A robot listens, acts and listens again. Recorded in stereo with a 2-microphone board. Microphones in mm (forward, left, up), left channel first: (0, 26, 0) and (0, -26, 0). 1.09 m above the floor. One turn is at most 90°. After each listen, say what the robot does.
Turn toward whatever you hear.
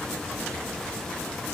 Keep listening.
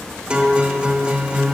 Turn 20° right.
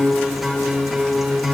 Found it: a guitar, straight ahead.